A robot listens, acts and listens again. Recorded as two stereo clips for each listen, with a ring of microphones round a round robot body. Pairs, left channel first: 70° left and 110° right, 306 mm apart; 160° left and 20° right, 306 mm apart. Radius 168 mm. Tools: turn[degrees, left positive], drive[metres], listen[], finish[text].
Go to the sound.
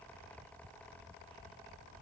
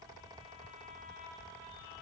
Action: listen[]
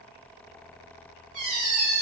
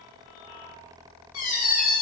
Thought: The squeak: 160° right.
Action: turn[-160]
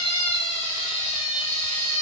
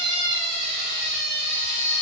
Action: drive[1.0]
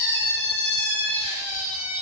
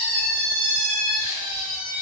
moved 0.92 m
Thought: The squeak is now 10° right.
Action: turn[-10]
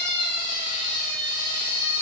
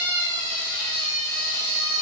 Action: drive[1.0]
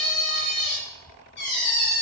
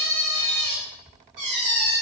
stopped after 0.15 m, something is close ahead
Action: finish[I am next to the squeak.]